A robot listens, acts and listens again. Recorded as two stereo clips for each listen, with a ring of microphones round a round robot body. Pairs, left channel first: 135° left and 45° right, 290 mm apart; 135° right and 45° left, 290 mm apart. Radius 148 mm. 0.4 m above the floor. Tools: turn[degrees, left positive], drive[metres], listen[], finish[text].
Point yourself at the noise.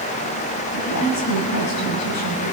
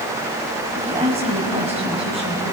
Thought: The woman speaking: 115° left.
Action: turn[115]
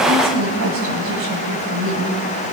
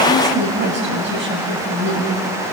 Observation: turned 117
Action: finish[Facing the woman speaking.]